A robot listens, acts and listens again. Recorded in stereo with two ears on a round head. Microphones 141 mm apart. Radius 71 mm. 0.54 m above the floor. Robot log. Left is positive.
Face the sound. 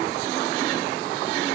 cmd idle
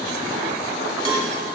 note: The cowbell: about 30° right or 150° right.
cmd yaw -30
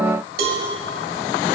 note: So it is at 115° right.
cmd yaw -115
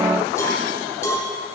note: The cowbell is now 20° left.
cmd yaw +20
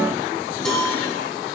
end: Found it: a cowbell, straight ahead, 1 to 2 m away.